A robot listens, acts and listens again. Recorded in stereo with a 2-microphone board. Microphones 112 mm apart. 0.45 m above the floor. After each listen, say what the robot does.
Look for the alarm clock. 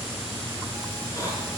Keep listening.
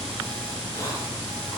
Keep listening.
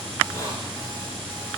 I can't make out an alarm clock to turn to.